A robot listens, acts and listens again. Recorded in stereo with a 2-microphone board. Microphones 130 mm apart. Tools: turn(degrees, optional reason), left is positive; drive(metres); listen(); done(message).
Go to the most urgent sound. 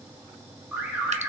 turn(degrees=-30)
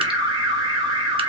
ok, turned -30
turn(degrees=-140, reason="So it is at 140° right.")
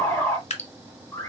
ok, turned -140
turn(degrees=20, reason="The alarm is now 20° left.")
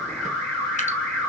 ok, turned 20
drive(metres=1.0)
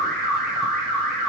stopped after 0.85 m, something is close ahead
done("I am next to the alarm.")